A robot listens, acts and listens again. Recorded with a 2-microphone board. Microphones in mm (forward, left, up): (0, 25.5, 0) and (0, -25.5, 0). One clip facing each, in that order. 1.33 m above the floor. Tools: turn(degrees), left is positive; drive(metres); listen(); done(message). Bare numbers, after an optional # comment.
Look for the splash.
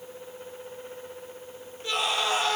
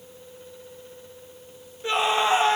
listen()
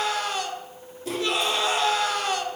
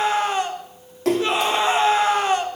# The splash: about 75° right or 105° right.
turn(-75)
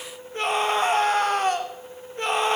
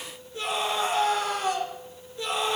listen()
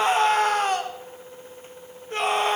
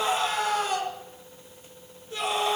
done("I heard a splash, but can't make it out now. It was about straight ahead or 30° right.")